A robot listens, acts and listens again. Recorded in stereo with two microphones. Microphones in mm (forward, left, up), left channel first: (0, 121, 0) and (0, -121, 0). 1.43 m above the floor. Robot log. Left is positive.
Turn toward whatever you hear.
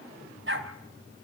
note: The dog barking: about 50° right or 130° right.
cmd yaw -50
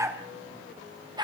note: So it is at 15° right.
cmd yaw -15
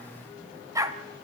note: The dog barking is now 15° right.
cmd yaw -15
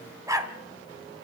note: The dog barking is now 15° right.
cmd yaw -15
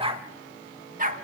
note: The dog barking is now 35° right.
cmd yaw -35
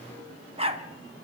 note: The dog barking is now 25° right.
cmd yaw -25
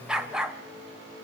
end: Facing the dog barking.